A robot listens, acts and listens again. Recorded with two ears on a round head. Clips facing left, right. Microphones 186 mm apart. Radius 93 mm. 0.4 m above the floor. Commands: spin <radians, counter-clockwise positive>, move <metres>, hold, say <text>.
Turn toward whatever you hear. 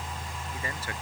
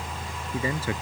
spin -1.57
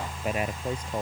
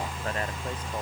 spin 0.17
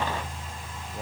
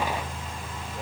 hold
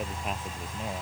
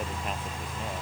hold
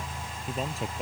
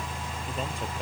say Found it: a man speaking, straight ahead.